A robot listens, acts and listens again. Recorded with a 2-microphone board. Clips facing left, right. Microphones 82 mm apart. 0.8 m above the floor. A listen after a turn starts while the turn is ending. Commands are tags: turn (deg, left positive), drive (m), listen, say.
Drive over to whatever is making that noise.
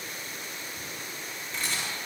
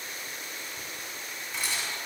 <turn deg="-30"/>
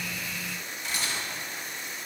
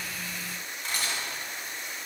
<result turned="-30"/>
<turn deg="-140"/>
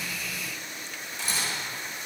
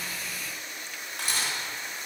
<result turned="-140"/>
<turn deg="-50"/>
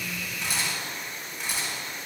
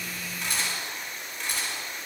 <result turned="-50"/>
<turn deg="10"/>
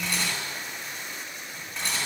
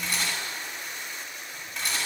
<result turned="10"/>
<drive m="1.0"/>
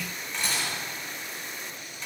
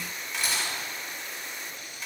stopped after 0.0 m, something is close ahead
<say>Something is in my way. I am facing the camera shutter but have not reached it.</say>